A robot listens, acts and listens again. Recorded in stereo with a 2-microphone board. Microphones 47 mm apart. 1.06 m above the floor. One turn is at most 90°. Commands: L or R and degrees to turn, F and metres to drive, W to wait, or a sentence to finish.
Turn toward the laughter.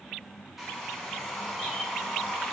W
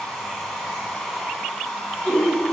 L25
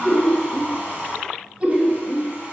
R25
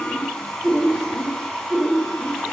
L10
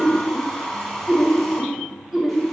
Facing the laughter, 1 to 2 m away.